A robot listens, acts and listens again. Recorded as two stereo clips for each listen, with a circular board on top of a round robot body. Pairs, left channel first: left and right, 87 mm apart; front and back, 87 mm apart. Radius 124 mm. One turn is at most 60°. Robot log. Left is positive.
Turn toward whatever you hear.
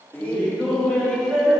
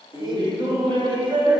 note: The laughter: 175° left.
cmd yaw +60
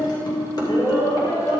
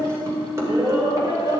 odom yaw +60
note: The laughter is now 135° left.
cmd yaw +60
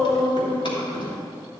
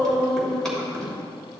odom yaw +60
note: The laughter is now 85° left.
cmd yaw +60
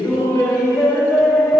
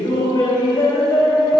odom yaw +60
note: The laughter is now 30° left.
cmd yaw +30
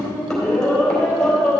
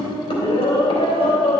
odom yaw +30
end: Found it: laughter, straight ahead, 2 to 4 m away.